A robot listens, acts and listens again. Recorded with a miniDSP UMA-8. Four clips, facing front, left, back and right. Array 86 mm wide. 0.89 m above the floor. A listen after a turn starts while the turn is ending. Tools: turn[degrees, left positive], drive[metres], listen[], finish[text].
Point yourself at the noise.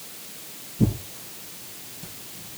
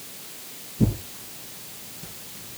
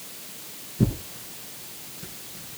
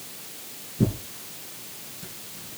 Thought: The tearing paper: 140° right.
Action: turn[-140]
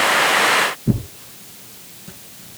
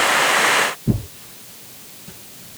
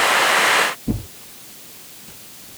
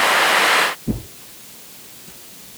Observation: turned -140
Thought: The tearing paper is now 25° left.
Action: turn[25]
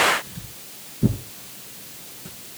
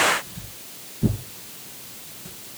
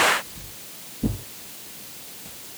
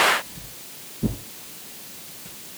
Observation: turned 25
Action: finish[Facing the tearing paper.]